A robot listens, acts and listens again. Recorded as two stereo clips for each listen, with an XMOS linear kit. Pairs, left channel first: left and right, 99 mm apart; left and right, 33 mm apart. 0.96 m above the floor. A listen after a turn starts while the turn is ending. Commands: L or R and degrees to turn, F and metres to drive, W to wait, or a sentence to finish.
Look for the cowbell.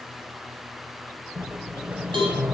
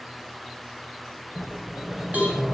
R55
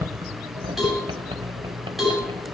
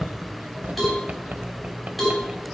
Facing the cowbell.